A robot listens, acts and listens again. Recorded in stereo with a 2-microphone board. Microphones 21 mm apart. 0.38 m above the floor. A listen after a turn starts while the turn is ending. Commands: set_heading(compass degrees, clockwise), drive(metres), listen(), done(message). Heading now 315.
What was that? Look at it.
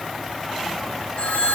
set_heading(255)
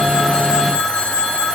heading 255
set_heading(190)
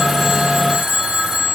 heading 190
set_heading(200)
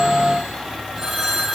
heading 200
done("Facing the phone ringing, over 4 m away.")